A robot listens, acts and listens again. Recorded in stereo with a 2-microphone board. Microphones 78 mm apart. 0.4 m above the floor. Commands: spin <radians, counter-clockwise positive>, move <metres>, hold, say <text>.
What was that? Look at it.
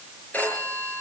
spin 0.35
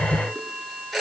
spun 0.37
say Facing the phone ringing.